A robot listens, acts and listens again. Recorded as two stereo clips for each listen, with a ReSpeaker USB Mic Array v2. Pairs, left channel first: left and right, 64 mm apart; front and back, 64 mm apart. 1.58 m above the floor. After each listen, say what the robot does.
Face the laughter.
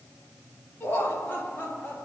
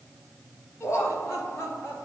Turn 35° left.
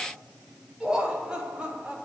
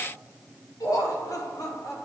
Turn 20° right.
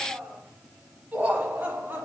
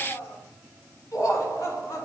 Turn 30° right.
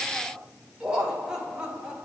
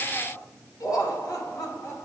Turn 15° right.
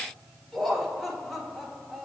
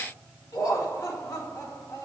Facing the laughter.